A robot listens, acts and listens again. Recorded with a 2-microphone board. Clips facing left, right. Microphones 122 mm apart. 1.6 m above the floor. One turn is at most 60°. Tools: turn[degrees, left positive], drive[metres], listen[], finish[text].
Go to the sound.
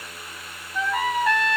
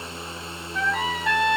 Action: turn[30]
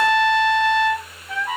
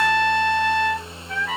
Thought: So it is at 150° left.
Action: turn[60]
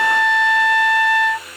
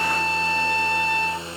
Thought: The trumpet is now 95° left.
Action: turn[60]
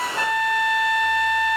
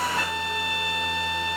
Thought: The trumpet is now 50° left.
Action: turn[50]
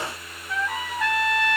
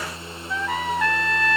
Action: drive[1.0]
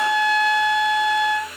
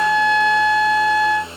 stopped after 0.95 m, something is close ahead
Action: finish[I am next to the trumpet.]